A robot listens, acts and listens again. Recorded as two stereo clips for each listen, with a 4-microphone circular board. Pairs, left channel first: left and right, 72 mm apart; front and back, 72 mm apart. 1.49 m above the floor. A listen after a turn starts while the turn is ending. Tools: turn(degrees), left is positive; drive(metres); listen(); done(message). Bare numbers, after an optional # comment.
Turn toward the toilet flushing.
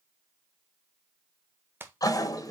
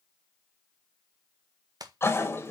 # The toilet flushing: 55° left.
turn(55)
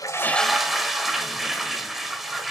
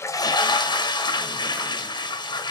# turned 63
done("Found it: a toilet flushing, straight ahead, 1 to 2 m away.")